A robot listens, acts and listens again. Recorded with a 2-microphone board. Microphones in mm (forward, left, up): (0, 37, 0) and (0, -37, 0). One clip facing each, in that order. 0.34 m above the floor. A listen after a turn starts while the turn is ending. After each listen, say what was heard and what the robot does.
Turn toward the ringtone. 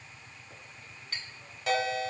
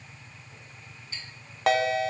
The ringtone: about 70° right or 110° right. Turn 70° right.
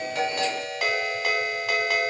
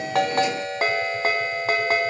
So it is at 35° right. Turn 35° right.
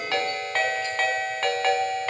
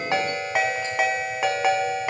The ringtone is now 10° right. Turn 10° right.
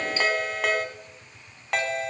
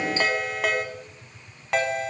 Facing the ringtone.